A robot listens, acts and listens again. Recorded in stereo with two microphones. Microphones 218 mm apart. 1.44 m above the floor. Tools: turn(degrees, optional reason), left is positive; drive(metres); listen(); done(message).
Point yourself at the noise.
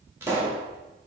turn(degrees=-30)
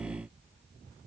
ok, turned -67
listen()
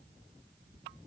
done("I heard a pop, but can't make it out now. It was about 55° left or 100° right.")